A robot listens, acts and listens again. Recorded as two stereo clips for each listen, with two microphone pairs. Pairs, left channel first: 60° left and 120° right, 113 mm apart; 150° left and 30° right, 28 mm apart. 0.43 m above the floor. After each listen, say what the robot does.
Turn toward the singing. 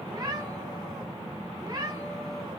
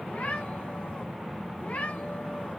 Keep listening.
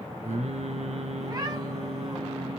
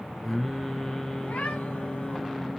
Turn 145° right.
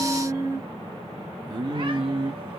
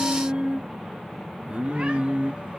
Turn 65° right.
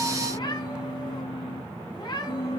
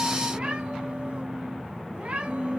Turn 20° left.
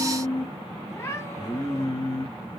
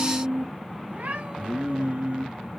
Facing the singing.